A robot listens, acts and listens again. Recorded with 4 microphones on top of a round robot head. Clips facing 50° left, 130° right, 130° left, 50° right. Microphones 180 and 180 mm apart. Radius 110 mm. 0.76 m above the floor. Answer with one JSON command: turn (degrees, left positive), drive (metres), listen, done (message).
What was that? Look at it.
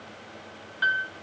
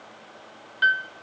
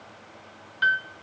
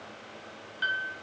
{"turn": 165}
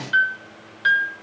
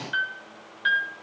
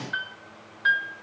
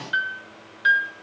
{"turn": 10}
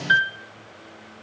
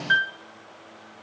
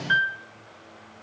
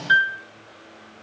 {"done": "Facing the piano, 1 to 2 m away."}